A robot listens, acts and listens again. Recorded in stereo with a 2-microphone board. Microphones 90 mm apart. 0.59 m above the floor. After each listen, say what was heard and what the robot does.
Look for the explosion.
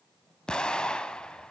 Turn 30° left.
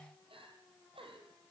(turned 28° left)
Keep listening.
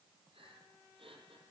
I heard an explosion, but can't make it out now. It was about 15° right or 140° left.